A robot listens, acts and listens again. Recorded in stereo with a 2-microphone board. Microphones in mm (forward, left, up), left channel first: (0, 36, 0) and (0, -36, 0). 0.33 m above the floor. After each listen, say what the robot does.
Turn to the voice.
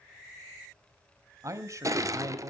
Turn 45° right.
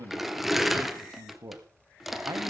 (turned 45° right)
Turn 70° right.
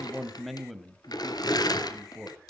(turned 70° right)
Facing the man speaking, 1 to 2 m away.